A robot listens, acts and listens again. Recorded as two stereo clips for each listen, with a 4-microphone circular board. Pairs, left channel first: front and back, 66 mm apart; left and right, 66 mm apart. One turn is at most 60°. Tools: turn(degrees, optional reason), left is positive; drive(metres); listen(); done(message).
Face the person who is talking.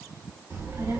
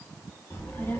turn(degrees=60, reason="The child speaking: 135° left.")
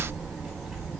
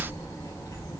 turn(degrees=60, reason="The child speaking is now 95° left.")
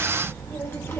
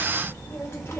turn(degrees=45, reason="The child speaking is now 45° left.")
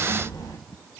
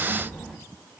done("Found it: a child speaking, straight ahead.")